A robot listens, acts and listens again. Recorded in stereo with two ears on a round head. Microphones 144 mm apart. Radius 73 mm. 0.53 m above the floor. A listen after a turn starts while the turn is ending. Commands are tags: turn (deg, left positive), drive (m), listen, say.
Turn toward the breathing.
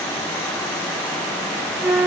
<listen/>
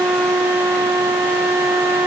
<listen/>
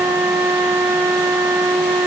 <say>I can't make out breathing to turn to.</say>